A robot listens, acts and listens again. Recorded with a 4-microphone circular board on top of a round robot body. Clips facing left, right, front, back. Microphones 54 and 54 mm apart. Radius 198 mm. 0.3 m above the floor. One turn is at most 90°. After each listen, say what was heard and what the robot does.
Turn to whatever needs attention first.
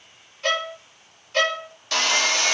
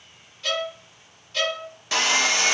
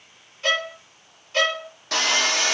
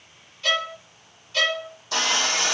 Keep listening.
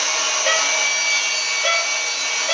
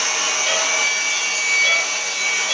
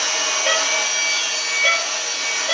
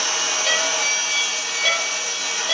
Keep listening.
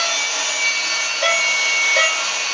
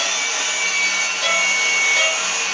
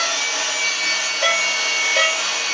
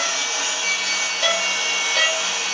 I can't make out anything urgent to turn to.